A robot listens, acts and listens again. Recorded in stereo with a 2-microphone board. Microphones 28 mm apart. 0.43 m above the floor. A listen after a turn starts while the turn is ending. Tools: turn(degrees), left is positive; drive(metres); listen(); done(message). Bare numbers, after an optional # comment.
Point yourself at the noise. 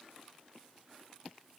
listen()
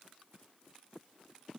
listen()
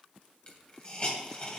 # The hiss: about 40° left or 140° left.
turn(40)
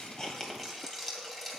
# So it is at 10° left.
turn(10)
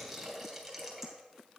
done("Found it: a hiss, straight ahead, 2 to 4 m away.")